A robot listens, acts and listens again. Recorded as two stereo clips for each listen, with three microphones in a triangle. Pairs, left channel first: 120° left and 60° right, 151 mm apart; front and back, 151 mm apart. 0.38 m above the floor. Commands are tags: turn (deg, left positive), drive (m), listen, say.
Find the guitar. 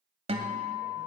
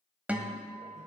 <turn deg="-100"/>
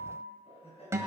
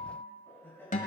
<turn deg="10"/>
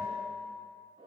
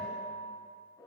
<say>Found it: a guitar, straight ahead, 1 to 2 m away.</say>